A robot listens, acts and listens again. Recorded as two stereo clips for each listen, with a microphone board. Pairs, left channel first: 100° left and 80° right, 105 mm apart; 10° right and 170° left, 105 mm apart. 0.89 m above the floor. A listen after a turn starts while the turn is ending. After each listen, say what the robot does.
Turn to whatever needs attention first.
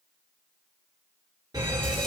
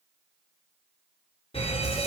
Turn 30° right.
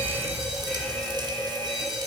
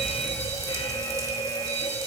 Turn 15° left.
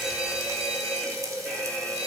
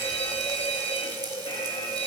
Facing the fire alarm.